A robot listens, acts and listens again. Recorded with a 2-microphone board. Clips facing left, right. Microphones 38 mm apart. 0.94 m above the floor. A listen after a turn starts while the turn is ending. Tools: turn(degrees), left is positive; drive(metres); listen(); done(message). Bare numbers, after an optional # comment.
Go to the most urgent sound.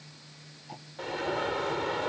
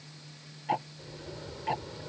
# The alarm: about 75° left or 105° left.
turn(75)
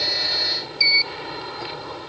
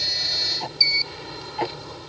# So it is at 25° left.
turn(25)
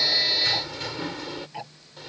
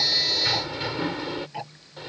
# The alarm is now 15° right.
turn(-15)
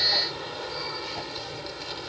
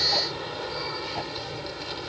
drive(1.0)
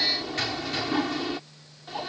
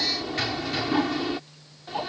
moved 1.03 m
drive(1.0)
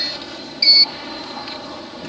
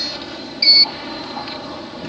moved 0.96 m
drive(1.0)
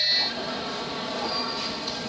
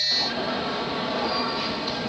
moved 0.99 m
# The alarm is now 20° right.
turn(-20)
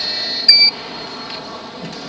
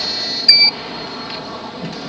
drive(1.0)
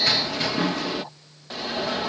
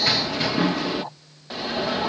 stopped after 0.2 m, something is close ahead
done("Arrived at the alarm, straight ahead.")